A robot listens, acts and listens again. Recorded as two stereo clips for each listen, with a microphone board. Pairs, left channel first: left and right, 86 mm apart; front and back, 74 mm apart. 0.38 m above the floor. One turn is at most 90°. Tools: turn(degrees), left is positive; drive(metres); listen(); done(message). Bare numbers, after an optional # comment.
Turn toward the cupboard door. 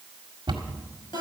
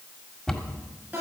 # The cupboard door: 80° right.
turn(-80)
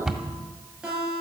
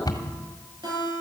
done("Found it: a cupboard door, straight ahead, 1 to 2 m away.")